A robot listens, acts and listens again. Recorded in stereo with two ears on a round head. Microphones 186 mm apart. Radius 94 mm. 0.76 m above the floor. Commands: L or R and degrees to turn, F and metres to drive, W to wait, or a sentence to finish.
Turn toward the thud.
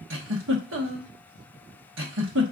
W
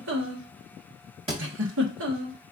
R25
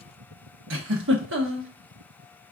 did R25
W
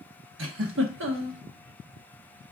I heard a thud, but can't make it out now. It was about straight ahead or 130° right.